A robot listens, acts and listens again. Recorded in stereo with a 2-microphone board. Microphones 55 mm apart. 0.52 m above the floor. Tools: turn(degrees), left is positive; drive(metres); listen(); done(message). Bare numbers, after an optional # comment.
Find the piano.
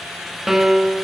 turn(-30)
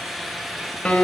# So it is at 20° left.
turn(20)
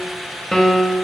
done("Found it: a piano, straight ahead.")